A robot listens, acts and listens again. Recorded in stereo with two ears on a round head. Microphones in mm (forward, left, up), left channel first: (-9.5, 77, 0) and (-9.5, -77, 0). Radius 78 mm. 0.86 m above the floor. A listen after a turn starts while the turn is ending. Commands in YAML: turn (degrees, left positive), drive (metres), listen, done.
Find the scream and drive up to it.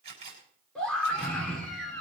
turn: 30
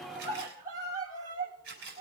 turn: -25
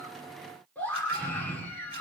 turn: 10
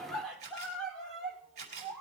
drive: 1.0
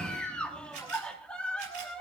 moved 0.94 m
drive: 1.0
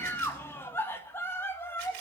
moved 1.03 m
turn: 20
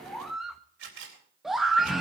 drive: 1.0
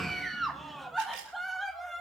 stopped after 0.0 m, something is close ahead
done: "I am next to the scream."